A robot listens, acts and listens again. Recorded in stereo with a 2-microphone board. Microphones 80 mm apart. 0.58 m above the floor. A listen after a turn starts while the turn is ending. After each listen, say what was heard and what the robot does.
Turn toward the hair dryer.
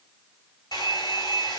The hair dryer: about 60° left or 120° left. Turn 60° left.
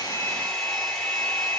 Found it: a hair dryer, straight ahead.